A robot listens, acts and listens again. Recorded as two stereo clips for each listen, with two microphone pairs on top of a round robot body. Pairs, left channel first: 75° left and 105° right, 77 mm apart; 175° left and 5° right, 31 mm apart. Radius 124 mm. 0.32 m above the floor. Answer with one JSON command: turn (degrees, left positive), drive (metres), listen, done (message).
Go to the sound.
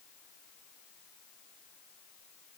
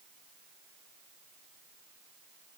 {"listen": true}
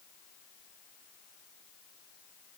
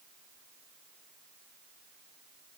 {"listen": true}
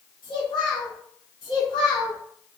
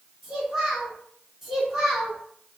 {"turn": 75}
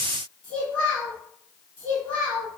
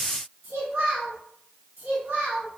{"drive": 1.0}
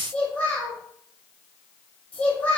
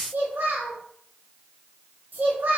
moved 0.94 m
{"drive": 1.0}
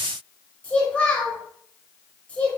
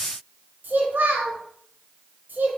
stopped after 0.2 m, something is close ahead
{"done": "I am next to the child speaking."}